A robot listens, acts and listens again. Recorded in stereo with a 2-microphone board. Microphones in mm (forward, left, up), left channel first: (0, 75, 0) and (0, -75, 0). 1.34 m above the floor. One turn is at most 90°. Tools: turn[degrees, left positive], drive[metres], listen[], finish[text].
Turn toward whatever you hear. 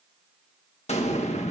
Thought: The explosion: about 50° left or 130° left.
Action: turn[50]
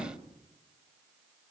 Thought: So it is at 85° left.
Action: turn[85]
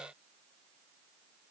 Action: finish[Facing where the explosion came from. I can't hear it now.]